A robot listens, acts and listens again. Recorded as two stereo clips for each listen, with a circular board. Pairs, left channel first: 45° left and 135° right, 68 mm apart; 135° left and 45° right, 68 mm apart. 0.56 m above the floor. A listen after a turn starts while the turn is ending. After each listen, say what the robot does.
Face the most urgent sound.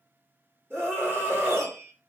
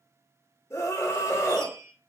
Turn 175° left.
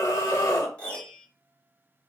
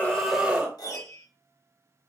Turn 25° left.
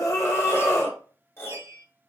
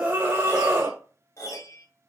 Facing the scream.